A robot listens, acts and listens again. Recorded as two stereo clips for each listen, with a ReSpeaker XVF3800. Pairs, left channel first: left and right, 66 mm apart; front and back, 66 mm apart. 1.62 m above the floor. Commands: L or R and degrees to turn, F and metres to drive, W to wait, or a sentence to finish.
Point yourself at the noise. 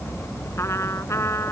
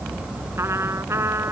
L135
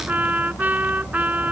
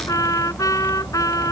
R25
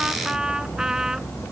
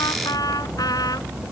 R10
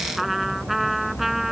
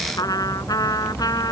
Facing the trumpet.